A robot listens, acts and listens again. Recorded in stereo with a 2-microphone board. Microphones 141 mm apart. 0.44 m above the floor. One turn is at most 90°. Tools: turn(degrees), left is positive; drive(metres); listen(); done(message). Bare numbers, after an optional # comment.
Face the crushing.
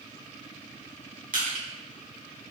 # The crushing: about 75° right or 105° right.
turn(-75)
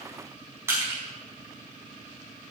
# So it is at 20° right.
turn(-20)
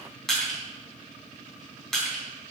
done("Found it: crushing, straight ahead, over 4 m away.")